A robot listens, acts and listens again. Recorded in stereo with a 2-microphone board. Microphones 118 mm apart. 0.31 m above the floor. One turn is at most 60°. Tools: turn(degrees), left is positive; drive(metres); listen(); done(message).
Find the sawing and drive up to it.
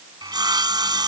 turn(degrees=-35)
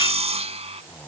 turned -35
turn(degrees=-60)
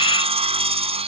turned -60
turn(degrees=-60)
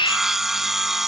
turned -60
drive(metres=1.0)
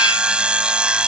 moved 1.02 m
turn(degrees=-10)
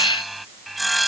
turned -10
drive(metres=1.0)
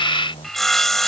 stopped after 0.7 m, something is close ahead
done("Arrived at the sawing, straight ahead.")